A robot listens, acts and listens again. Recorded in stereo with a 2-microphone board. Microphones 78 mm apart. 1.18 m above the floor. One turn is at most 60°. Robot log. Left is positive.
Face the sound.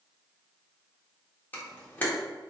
note: The camera shutter: about 25° left or 155° left.
cmd yaw +25
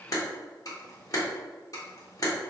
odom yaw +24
note: So it is at 130° left.
cmd yaw +60
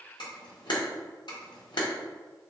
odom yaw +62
note: The camera shutter is now 70° left.
cmd yaw +60
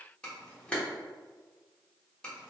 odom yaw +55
note: The camera shutter is now 10° left.
cmd yaw +10
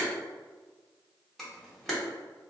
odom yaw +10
end: Facing the camera shutter, 1 to 2 m away.